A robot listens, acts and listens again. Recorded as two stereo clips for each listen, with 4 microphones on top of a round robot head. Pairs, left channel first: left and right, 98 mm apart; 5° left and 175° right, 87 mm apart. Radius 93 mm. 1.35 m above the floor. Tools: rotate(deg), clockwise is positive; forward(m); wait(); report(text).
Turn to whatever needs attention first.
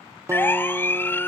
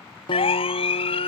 rotate(-20)
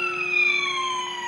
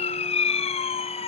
report("Facing the siren.")